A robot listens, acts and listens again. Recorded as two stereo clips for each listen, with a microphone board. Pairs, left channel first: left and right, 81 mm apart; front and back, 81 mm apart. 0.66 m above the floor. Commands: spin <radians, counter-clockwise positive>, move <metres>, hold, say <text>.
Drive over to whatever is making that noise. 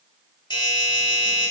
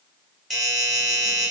spin 1.66
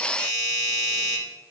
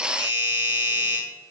move 1.0
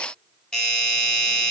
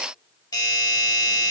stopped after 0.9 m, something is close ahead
spin 0.17
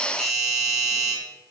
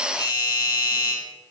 say Arrived at the doorbell, straight ahead.